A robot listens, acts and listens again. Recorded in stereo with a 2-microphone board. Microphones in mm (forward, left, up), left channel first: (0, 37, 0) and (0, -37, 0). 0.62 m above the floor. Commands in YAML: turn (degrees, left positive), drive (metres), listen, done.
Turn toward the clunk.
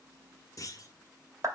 turn: 45
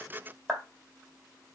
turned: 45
listen: true
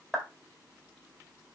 done: "I heard a clunk, but can't make it out now. It was about straight ahead or 90° left."